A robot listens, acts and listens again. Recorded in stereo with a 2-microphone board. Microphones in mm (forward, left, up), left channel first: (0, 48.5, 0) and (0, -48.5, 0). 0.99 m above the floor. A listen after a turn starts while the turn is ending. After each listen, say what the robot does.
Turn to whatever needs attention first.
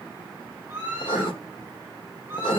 Turn 25° right.
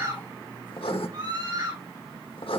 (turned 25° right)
Turn 130° right.
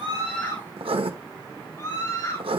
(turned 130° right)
Turn 30° left.
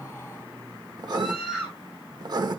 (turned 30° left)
Facing the scream, over 4 m away.